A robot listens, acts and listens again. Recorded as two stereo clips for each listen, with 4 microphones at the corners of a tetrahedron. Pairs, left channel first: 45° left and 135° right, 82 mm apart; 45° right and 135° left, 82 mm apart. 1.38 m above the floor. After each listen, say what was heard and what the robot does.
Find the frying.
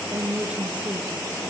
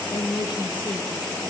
Keep listening.
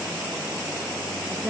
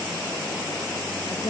Keep listening.
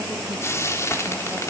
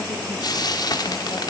The frying: 10° right. Turn 10° right.
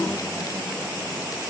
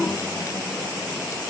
Keep listening.
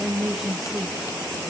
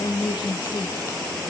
Keep listening.
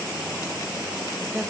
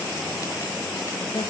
I heard frying from this way, but can't make it out now.